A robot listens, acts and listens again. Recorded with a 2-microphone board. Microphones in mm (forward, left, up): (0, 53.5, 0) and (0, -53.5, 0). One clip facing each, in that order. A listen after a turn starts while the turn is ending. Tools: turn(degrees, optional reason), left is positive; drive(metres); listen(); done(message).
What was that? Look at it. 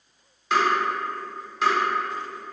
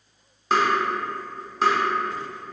turn(degrees=-40, reason="The tapping: about 40° right or 140° right.")
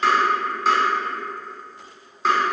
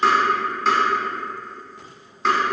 done("Facing the tapping.")